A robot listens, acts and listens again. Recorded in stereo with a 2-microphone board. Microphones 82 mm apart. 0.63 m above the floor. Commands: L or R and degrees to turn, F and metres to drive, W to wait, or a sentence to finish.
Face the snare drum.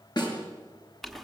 L65
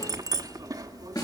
L55
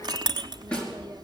L10
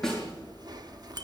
Found it: a snare drum, straight ahead.